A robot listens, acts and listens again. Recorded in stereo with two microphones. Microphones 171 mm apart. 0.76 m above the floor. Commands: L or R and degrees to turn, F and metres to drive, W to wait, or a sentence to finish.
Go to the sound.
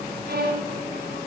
R70
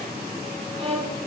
R35
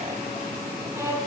R20
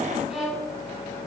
F1.0
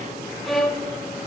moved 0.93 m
F1.0
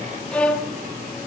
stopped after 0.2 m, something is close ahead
I am next to the violin.